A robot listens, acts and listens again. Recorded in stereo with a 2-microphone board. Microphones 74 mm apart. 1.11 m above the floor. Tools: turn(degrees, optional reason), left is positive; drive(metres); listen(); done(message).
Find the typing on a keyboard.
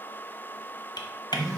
turn(degrees=70, reason="The typing on a keyboard: about 70° left or 110° left.")
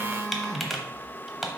done("Found it: typing on a keyboard, straight ahead, 1 to 2 m away.")